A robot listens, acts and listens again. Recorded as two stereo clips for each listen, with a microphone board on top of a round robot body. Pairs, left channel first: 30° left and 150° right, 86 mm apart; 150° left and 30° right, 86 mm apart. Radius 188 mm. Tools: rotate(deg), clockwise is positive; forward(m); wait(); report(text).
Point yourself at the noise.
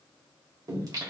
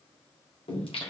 rotate(-160)
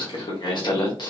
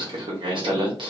rotate(10)
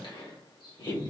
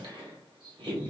rotate(10)
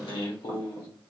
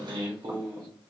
report("Found it: singing, straight ahead.")